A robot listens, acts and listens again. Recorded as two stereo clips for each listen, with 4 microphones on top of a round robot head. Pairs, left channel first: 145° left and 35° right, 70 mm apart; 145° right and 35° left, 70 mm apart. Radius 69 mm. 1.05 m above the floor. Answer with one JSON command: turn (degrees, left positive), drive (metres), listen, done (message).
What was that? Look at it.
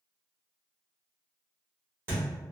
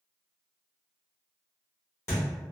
{"turn": -95}
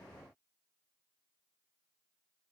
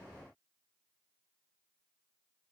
{"done": "Facing where the thud came from. I can't hear it now."}